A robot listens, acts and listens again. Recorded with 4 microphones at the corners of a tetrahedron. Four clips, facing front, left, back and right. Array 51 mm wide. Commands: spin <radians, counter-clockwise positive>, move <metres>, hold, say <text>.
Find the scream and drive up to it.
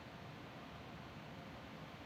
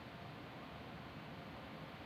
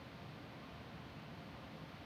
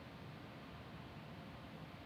hold
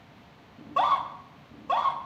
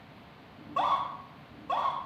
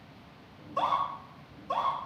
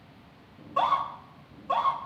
move 1.0
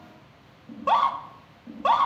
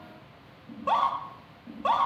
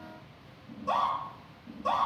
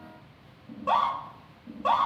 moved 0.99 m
move 1.0
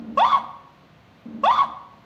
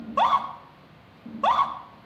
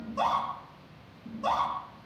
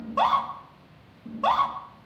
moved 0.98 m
move 1.0
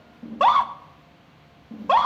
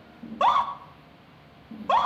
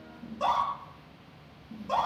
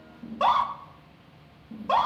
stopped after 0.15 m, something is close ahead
spin 0.17
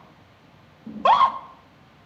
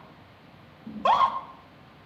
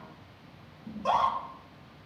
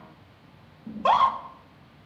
say I am next to the scream.